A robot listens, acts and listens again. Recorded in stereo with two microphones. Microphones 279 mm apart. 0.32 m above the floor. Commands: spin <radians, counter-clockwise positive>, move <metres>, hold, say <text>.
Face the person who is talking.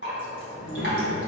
spin 0.44
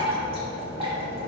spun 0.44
hold
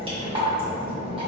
spin 0.70
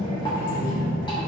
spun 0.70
spin 1.83
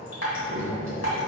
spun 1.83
spin 0.44
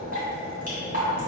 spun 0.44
hold
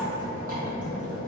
spin 0.26
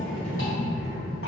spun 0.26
say Facing the child speaking, over 4 m away.